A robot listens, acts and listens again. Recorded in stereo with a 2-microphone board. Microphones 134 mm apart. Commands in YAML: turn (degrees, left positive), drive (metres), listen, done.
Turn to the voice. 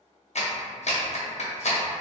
listen: true
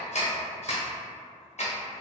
listen: true
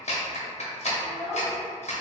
turn: 30
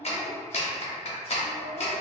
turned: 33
turn: -25
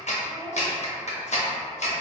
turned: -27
done: "Found it: a child speaking, straight ahead, 1 to 2 m away."